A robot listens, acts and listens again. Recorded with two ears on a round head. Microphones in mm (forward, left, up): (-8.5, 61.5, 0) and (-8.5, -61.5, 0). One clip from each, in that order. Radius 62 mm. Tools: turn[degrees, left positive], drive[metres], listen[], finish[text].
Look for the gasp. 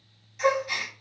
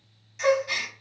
Action: turn[-30]
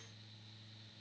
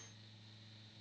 Action: listen[]
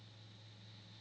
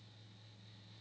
Action: finish[I heard a gasp, but can't make it out now. It was about 15° left or 135° right.]